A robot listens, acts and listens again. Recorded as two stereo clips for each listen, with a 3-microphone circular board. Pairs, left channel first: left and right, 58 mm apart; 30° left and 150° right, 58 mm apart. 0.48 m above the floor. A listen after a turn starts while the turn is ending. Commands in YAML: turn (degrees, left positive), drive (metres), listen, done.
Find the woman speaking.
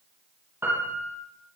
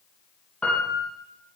listen: true
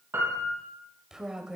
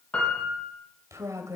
turn: -165
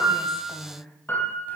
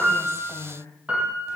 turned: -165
turn: 30
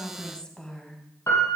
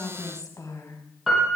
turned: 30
turn: 15
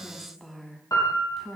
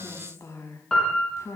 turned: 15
done: "Facing the woman speaking, over 4 m away."